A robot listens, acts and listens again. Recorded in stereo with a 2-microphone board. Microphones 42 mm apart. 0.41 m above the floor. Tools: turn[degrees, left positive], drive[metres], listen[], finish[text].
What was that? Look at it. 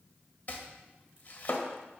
Thought: The chopping: about 40° left or 140° left.
Action: turn[40]
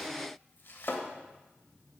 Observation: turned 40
Thought: So it is at 90° left.
Action: turn[90]
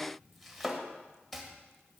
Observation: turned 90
Action: finish[Found it: chopping, straight ahead.]